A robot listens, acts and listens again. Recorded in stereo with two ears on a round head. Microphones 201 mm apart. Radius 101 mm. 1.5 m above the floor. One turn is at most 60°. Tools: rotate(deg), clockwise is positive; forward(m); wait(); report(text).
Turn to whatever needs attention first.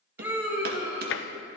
rotate(30)
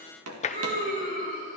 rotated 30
rotate(60)
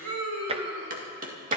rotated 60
rotate(60)
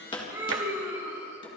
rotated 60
rotate(15)
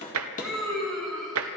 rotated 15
report("Facing the scream.")